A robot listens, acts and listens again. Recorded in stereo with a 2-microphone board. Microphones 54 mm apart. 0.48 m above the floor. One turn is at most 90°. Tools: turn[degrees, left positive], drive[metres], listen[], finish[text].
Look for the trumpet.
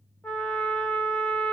Thought: The trumpet: about 25° left or 155° left.
Action: turn[25]
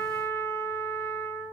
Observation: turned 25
Thought: So it is at 125° left.
Action: turn[90]
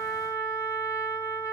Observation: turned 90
Thought: The trumpet is now 70° left.
Action: turn[70]
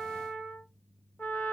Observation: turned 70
Thought: The trumpet is now 30° left.
Action: turn[30]
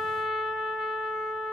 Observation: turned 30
Action: finish[Facing the trumpet.]